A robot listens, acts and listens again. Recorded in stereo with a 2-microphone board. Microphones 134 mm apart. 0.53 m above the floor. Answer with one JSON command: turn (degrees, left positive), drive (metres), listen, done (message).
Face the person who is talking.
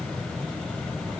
{"listen": true}
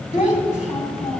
{"turn": 65}
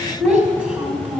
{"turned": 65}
{"turn": -10}
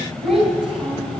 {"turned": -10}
{"done": "Facing the child speaking."}